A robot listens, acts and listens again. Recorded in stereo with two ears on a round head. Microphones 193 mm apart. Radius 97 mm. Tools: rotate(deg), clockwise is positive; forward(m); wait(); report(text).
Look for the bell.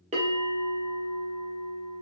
rotate(30)
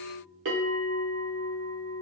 rotate(115)
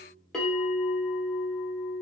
report("Facing the bell, 1 to 2 m away.")